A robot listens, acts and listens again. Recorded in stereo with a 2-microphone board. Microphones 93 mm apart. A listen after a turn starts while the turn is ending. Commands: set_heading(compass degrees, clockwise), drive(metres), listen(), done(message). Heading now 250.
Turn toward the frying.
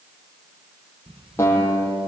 listen()
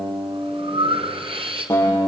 listen()
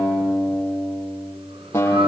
done("I can't make out frying, only a guitar and breathing.")